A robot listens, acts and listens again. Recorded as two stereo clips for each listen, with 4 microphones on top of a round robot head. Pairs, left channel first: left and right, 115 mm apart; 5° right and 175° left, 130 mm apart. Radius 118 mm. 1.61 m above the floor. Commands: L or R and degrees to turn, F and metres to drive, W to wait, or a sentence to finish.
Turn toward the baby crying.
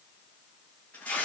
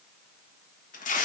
W
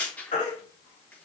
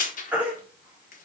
L100
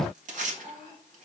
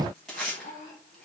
W
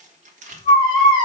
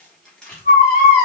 Found it: a baby crying, straight ahead, 2 to 4 m away.